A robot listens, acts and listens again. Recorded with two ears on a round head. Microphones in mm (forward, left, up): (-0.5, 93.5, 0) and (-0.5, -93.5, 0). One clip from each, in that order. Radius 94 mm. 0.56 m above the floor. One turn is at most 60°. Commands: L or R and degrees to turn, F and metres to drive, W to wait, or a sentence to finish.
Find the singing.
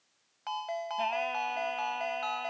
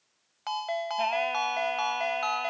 R25
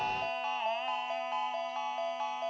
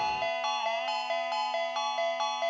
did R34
W
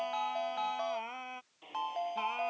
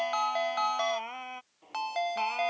R15
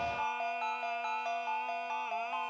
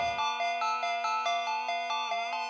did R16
W
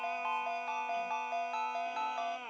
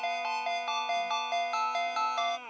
Found it: singing, straight ahead.